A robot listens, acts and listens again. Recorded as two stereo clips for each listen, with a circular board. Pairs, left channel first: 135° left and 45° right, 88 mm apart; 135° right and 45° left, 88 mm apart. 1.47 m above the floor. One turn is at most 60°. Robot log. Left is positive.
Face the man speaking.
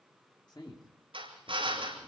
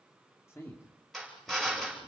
note: The man speaking: 165° left.
cmd yaw +60
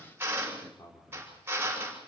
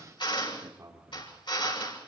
note: The man speaking is now 95° left.
cmd yaw +60
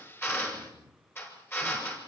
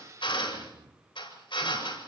note: The man speaking is now 35° left.
cmd yaw +35
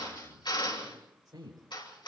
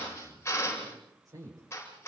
end: Facing the man speaking.